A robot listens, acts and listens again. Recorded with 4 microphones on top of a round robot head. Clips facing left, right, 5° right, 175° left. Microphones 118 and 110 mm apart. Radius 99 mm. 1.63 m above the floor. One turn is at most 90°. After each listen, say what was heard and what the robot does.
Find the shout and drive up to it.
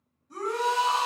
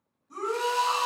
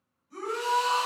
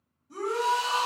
The shout: 170° right. Turn 90° right.
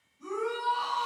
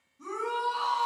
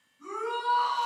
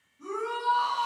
The shout is now 110° right. Turn 90° right.
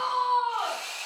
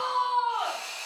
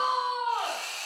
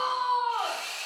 The shout is now 15° right. Turn 15° right.
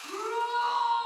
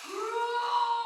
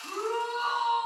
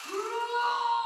Drive 1.0 m forward.
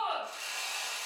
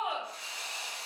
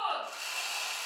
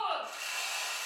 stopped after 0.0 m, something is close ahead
Blocked. The shout is further on, straight ahead.